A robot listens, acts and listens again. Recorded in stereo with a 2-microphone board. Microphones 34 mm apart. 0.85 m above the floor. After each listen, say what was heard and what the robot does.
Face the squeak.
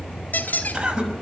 The squeak: about 65° left or 115° left. Turn 65° left.
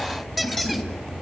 Keep listening.
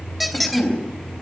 Facing the squeak.